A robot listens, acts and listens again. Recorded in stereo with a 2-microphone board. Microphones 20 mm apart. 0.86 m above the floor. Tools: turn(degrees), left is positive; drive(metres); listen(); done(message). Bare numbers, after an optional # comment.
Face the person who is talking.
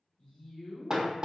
# The woman speaking: about 65° left or 115° left.
turn(65)
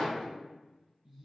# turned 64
# So it is at 10° right.
turn(-10)
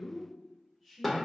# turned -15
done("Facing the woman speaking, 2 to 4 m away.")